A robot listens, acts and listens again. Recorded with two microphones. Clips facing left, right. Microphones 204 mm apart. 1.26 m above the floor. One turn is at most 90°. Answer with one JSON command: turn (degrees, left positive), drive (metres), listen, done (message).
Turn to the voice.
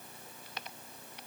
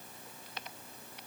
{"listen": true}
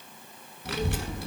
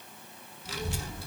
{"turn": 65}
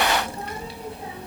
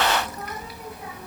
{"turn": 30}
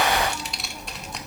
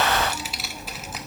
{"done": "Facing the child speaking."}